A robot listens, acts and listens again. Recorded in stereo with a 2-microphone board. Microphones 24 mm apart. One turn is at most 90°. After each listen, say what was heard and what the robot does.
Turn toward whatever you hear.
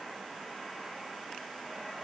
Keep listening.
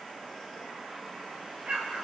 The explosion: about 50° right or 130° right. Turn 50° right.
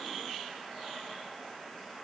Keep listening.
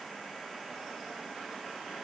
I heard an explosion, but can't make it out now. It was about straight ahead or 80° right.